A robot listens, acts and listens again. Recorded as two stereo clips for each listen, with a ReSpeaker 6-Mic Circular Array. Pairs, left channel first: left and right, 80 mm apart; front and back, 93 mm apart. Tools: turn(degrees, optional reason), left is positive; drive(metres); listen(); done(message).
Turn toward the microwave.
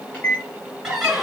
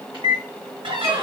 turn(degrees=155, reason="The microwave: 155° left.")
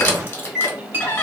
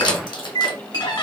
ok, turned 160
done("Found it: a microwave, straight ahead, 1 to 2 m away.")